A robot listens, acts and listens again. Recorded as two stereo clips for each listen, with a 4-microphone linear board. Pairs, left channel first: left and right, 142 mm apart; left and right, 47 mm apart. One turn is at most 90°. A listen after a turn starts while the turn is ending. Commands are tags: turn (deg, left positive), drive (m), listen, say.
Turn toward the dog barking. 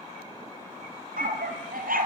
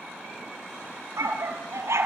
<turn deg="-90"/>
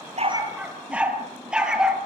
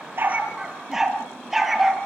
<say>Found it: a dog barking, straight ahead, 2 to 4 m away.</say>